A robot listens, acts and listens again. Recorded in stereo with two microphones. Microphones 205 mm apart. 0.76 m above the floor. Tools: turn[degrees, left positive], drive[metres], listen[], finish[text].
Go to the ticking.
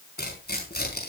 Action: listen[]
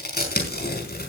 Action: listen[]
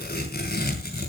Action: finish[I can't make out ticking, only tearing paper.]